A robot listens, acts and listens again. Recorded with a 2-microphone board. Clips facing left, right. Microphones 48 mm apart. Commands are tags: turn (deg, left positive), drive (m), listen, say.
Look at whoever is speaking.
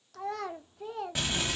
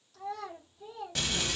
<turn deg="70"/>
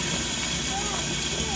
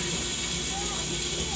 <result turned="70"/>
<listen/>
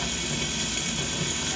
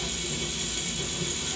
<listen/>
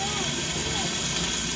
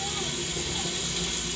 <say>I heard a child speaking, but can't make it out now. It was about straight ahead or 40° left.</say>